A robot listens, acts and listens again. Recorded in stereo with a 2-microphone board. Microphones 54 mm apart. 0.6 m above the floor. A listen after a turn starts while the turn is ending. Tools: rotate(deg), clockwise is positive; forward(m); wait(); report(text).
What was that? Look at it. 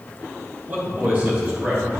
rotate(30)
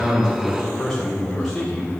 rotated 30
rotate(-10)
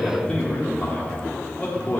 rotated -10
rotate(-35)
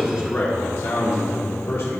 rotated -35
rotate(-50)
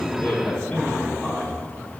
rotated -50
report("Facing the man speaking.")